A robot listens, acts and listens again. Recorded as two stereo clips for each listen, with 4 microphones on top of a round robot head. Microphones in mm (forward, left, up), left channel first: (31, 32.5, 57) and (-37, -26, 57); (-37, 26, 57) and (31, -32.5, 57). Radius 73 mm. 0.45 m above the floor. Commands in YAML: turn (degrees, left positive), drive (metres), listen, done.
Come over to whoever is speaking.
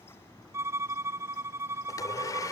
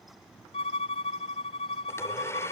listen: true
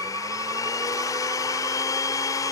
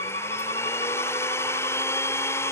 listen: true
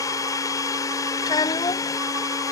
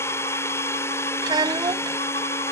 drive: 1.0
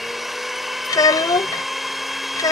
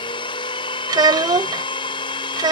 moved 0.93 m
drive: 1.0
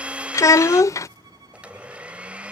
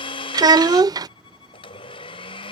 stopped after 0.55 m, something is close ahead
turn: -10
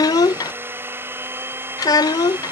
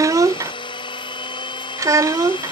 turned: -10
done: "I am next to the child speaking."